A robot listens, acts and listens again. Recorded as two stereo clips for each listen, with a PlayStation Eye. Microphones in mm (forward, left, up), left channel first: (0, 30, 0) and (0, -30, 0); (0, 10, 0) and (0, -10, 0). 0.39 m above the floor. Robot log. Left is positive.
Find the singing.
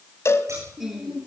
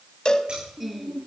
cmd yaw -30
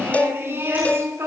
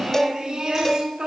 note: So it is at 135° right.
cmd yaw -135
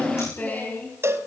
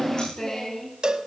note: The singing is now 30° left.
cmd yaw +30
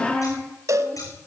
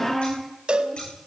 note: The singing is now 20° left.
cmd yaw +20
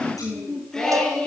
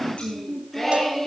note: The singing is now 10° left.
cmd yaw +10
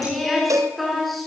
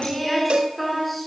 end: Found it: singing, straight ahead.